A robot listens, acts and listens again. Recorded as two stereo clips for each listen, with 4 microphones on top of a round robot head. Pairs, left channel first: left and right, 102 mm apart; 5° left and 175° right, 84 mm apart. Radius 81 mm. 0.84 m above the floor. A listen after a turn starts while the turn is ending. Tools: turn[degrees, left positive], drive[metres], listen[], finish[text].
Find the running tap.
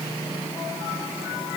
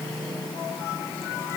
Action: listen[]
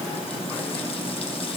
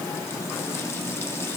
Action: listen[]
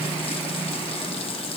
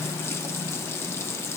Thought: The running tap: 60° left.
Action: turn[60]
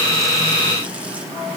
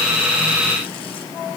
Action: listen[]
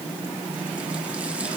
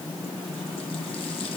Action: listen[]
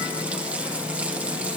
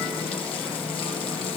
Action: finish[Facing where the running tap came from. I can't hear it now.]